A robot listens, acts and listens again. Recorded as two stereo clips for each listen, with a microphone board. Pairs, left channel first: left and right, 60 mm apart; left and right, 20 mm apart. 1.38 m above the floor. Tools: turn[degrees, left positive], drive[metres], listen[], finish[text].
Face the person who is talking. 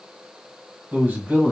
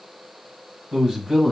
Thought: The man speaking: about 25° right or 155° right.
Action: turn[-25]
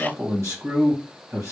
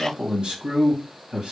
Thought: So it is at 130° right.
Action: turn[-130]
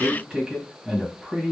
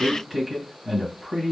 Thought: The man speaking is now 15° right.
Action: turn[-15]
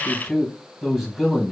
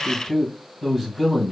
Action: finish[Found it: a man speaking, straight ahead.]